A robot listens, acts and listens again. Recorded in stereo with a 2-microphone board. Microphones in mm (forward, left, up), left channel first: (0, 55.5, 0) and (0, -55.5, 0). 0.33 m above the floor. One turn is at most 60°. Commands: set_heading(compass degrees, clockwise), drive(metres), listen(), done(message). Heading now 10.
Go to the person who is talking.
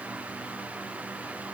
listen()
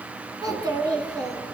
set_heading(50)
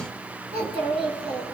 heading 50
set_heading(110)
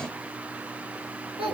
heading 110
set_heading(170)
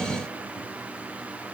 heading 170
listen()
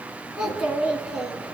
drive(1.0)
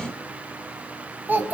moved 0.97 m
set_heading(190)
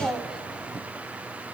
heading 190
drive(1.0)
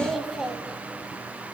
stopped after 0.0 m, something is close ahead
done("I am next to the child speaking.")